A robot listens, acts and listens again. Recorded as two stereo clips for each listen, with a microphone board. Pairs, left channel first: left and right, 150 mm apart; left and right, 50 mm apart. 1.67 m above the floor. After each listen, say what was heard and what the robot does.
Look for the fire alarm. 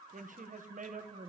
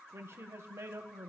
Keep listening.
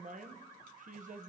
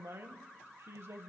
Keep listening.
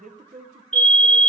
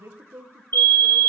The fire alarm: about 55° left or 125° left. Turn 55° left.
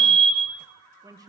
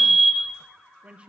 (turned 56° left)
So it is at 10° left. Turn 10° left.
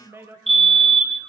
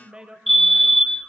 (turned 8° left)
Found it: a fire alarm, straight ahead, 1 to 2 m away.